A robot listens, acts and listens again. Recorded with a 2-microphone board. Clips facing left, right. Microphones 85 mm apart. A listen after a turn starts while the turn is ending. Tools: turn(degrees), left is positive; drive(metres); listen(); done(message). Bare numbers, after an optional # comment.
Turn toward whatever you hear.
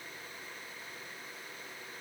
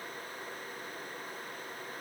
listen()
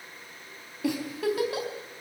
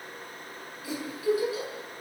# The giggle: about 70° left or 110° left.
turn(70)
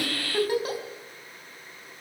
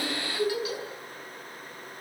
# So it is at 45° left.
turn(45)
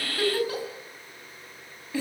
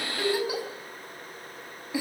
# The giggle is now 15° right.
turn(-15)
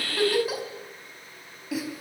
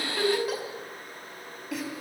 done("Facing the giggle.")